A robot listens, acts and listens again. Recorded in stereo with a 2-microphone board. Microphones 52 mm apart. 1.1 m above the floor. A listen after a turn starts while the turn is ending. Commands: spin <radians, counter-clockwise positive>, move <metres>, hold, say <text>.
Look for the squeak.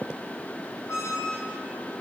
spin 1.05
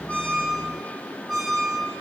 say Facing the squeak, over 4 m away.